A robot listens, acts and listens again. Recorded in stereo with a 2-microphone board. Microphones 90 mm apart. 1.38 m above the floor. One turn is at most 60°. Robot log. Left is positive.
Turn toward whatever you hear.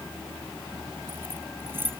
note: The keys jangling: about 20° right or 160° right.
cmd yaw -20
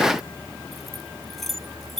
end: Facing the keys jangling.